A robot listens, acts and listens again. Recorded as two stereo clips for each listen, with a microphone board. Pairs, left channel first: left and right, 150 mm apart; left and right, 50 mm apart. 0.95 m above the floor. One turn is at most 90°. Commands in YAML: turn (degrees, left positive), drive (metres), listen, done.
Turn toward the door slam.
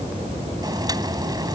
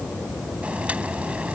listen: true
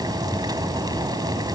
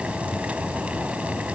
listen: true
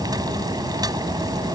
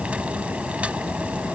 done: "I can't make out a door slam to turn to."